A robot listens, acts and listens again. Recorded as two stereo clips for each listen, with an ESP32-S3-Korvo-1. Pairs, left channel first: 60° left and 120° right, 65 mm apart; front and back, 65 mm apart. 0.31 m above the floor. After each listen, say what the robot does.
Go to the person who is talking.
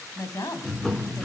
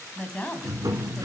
Turn 65° left.
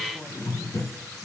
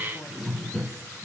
Keep listening.
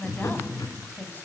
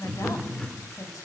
Drive 1.0 m forward.
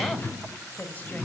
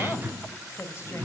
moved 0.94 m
Drive 1.0 m forward.
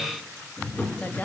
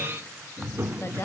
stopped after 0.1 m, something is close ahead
Turn 10° left.
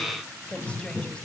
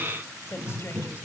I am next to the woman speaking.